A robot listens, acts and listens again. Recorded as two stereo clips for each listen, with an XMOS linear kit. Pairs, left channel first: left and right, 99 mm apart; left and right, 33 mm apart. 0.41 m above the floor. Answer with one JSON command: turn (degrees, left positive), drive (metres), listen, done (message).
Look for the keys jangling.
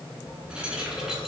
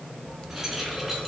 {"turn": -30}
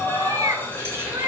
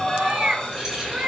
{"turn": -155}
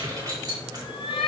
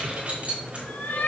{"turn": -45}
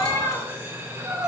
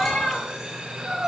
{"listen": true}
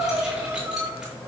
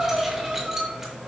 {"listen": true}
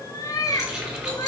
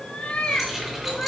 {"done": "Facing the keys jangling, over 4 m away."}